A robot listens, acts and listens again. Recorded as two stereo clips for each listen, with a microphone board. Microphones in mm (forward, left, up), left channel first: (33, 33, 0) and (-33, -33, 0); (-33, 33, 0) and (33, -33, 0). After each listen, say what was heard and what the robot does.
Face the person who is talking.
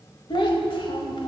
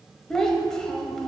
The child speaking: 50° left. Turn 50° left.
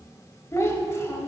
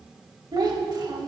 The child speaking is now 10° right. Turn 10° right.
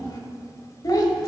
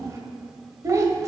Facing the child speaking, 1 to 2 m away.